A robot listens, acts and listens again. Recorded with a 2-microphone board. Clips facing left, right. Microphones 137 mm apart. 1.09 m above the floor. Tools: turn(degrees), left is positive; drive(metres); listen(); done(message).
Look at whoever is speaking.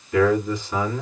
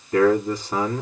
turn(degrees=-40)
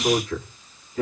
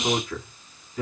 done("Found it: a man speaking, straight ahead.")